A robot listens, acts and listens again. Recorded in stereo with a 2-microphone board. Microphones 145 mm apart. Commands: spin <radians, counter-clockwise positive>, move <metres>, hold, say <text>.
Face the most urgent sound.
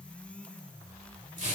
hold
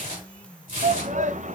spin -0.96
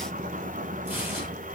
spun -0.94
hold
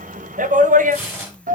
spin -1.13
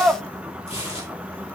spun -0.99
spin -0.17
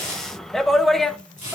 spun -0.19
say Found it: a shout, straight ahead, under 1 m away.